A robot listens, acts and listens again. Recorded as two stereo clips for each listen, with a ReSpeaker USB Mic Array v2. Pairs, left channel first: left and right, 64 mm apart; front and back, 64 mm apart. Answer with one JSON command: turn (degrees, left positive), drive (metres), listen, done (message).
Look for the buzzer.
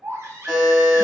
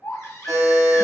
{"turn": -175}
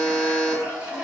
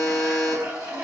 {"turn": 10}
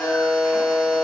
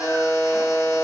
{"done": "Facing the buzzer, 1 to 2 m away."}